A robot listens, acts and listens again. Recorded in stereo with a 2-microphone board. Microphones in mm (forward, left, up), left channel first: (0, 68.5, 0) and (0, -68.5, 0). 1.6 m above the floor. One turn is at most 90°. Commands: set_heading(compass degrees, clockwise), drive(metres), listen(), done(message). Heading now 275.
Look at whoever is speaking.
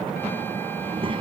set_heading(315)
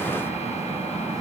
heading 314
listen()
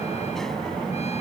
listen()
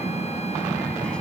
done("Found it: a child speaking, straight ahead.")